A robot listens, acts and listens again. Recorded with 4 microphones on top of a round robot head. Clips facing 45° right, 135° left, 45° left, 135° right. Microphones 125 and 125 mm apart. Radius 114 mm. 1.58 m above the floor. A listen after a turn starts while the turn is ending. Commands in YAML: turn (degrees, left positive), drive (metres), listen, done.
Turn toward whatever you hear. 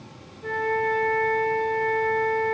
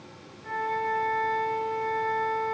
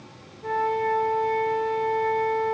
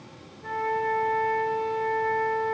turn: -20
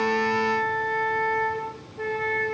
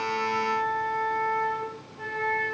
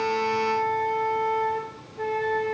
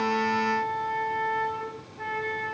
done: "Facing the flute, 2 to 4 m away."